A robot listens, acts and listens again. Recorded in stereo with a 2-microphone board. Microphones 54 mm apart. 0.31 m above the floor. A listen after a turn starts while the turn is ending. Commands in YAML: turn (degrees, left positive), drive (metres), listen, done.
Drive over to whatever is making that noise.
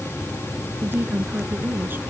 turn: -40
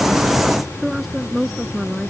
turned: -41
drive: 1.0
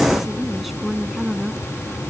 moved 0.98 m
drive: 1.0
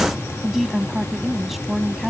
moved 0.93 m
drive: 1.0
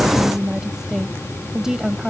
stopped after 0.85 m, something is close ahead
turn: -15
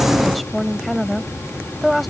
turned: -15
done: "I am next to the woman speaking."